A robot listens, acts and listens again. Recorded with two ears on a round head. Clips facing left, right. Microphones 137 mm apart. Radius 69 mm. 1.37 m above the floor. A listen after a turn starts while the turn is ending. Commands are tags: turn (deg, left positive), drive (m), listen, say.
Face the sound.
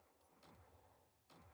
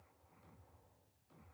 <listen/>
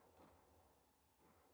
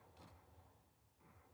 <listen/>
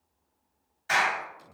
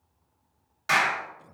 <turn deg="-90"/>
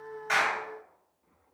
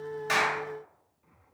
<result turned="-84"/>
<listen/>
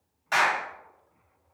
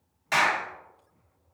<turn deg="-10"/>
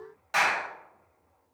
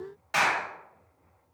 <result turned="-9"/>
<say>Facing the clap.</say>